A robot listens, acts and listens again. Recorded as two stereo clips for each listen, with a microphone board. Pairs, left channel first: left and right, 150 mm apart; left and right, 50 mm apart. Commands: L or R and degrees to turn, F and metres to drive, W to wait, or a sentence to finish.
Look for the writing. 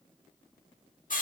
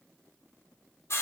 W
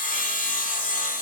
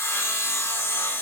W
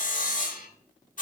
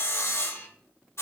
I can't make out writing to turn to.